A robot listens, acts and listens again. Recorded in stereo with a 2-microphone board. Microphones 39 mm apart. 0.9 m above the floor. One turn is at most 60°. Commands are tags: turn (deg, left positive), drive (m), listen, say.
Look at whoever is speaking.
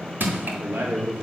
<turn deg="-60"/>
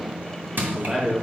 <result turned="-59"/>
<turn deg="-10"/>
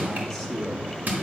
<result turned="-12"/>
<say>Found it: a man speaking, straight ahead, 2 to 4 m away.</say>